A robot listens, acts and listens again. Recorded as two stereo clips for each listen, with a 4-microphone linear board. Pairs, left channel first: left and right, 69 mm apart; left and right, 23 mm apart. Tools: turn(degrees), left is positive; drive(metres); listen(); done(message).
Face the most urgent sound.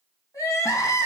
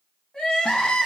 turn(degrees=50)
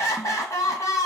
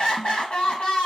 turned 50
turn(degrees=75)
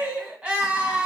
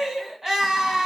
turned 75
turn(degrees=-10)
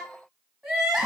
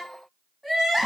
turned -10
done("Found it: crying, straight ahead.")